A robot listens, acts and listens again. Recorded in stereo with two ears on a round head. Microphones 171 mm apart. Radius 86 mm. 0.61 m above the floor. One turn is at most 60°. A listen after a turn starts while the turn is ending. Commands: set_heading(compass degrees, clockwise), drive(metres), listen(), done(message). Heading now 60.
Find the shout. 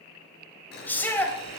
set_heading(30)
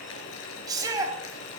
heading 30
set_heading(50)
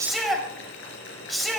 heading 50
done("Facing the shout.")